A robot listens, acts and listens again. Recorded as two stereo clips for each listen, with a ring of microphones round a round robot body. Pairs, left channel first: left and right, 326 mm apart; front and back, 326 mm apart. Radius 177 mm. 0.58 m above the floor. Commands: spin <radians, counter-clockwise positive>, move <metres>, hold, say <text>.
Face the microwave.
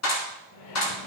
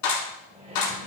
spin 1.83
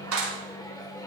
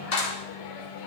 spin 0.17
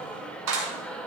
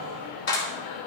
say Facing the microwave.